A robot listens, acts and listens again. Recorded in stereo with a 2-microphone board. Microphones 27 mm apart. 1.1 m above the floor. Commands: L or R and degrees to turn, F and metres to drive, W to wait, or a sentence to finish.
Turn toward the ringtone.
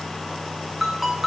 R30
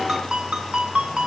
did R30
R140
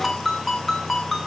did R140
L10
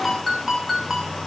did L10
Found it: a ringtone, straight ahead.